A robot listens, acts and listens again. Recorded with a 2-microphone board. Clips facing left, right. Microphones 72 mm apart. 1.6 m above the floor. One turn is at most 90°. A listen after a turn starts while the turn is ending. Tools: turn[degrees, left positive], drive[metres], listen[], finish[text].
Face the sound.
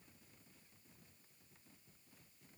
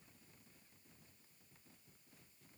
Action: listen[]
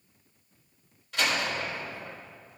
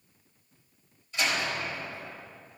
Action: turn[90]
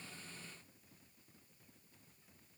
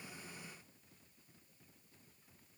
Action: finish[Facing where the door slam came from. I can't hear it now.]